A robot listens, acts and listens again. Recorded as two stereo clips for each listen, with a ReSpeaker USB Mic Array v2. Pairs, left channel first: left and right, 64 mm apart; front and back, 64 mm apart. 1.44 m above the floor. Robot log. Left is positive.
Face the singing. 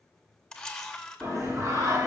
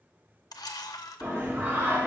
note: The singing: 120° right.
cmd yaw -120
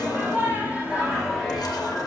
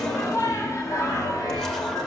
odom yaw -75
end: Found it: singing, straight ahead, 1 to 2 m away.